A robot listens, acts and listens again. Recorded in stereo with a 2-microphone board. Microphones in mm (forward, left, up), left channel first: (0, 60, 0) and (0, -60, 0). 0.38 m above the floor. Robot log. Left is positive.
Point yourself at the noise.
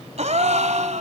note: The gasp: about 70° right or 110° right.
cmd yaw -70
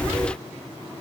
cmd idle
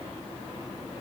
end: I heard a gasp, but can't make it out now. It was about straight ahead or 40° right.